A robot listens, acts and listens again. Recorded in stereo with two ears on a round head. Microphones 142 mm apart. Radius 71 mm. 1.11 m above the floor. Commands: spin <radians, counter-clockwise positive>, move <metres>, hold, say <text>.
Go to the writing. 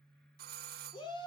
hold
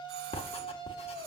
spin 0.61
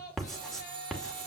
move 1.0
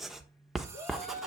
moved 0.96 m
move 1.0
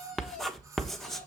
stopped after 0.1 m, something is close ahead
say I am next to the writing.